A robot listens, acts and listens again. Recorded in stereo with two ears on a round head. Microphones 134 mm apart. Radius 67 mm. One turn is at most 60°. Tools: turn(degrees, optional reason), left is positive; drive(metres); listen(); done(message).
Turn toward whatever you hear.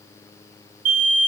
turn(degrees=-60, reason="The alarm: about 65° right or 115° right.")
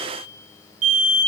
turn(degrees=-55, reason="So it is at 55° right.")
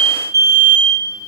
turn(degrees=-20, reason="The alarm is now 20° right.")
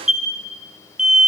done("Facing the alarm, over 4 m away.")